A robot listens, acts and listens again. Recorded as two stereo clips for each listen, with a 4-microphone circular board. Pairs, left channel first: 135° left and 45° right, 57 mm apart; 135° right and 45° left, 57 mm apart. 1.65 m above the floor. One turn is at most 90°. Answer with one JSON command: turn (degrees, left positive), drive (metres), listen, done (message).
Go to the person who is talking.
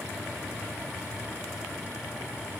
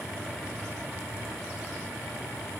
{"listen": true}
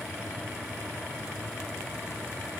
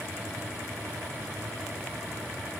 {"listen": true}
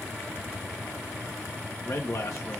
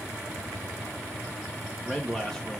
{"turn": 90}
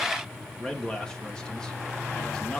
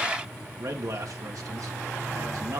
{"turn": 60}
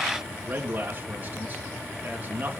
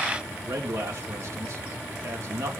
{"turn": 15}
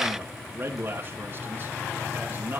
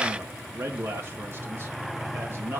{"drive": 1.0}
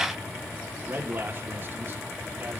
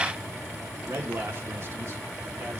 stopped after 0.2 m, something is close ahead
{"done": "Blocked. The man speaking is further on, straight ahead."}